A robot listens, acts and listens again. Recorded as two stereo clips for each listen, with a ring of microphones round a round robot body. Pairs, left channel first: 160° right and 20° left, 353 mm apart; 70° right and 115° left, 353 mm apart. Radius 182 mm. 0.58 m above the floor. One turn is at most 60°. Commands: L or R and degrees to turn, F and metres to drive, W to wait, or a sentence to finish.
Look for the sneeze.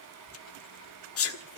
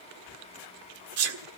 L60
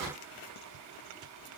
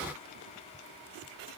L60
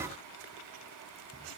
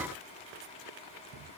L35
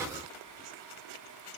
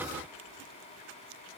Facing where the sneeze came from. I can't hear it now.